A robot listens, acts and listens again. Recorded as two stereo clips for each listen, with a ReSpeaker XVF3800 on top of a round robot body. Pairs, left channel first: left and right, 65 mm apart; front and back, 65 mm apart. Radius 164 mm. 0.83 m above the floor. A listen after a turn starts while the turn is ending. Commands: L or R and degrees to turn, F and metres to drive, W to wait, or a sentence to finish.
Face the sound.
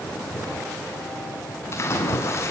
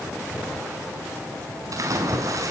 L140
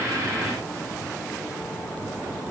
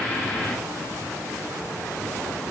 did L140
I heard a splash from this way, but can't make it out now.